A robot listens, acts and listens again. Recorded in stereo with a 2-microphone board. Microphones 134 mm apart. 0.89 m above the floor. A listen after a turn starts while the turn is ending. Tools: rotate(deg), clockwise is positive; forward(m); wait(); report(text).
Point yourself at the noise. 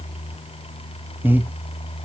rotate(30)
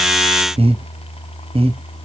rotate(135)
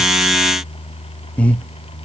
rotate(-10)
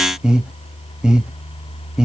report("Facing the breathing.")